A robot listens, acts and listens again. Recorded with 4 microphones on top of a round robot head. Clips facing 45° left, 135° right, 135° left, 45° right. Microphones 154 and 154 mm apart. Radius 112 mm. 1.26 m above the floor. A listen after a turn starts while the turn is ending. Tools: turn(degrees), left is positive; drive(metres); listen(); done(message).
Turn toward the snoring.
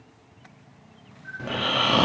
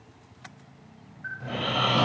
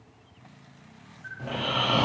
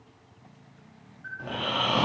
turn(degrees=50)
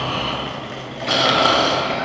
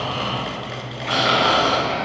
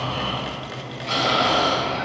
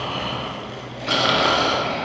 turn(degrees=-10)
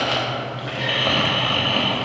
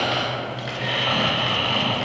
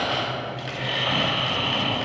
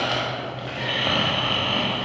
done("Facing the snoring, 1 to 2 m away.")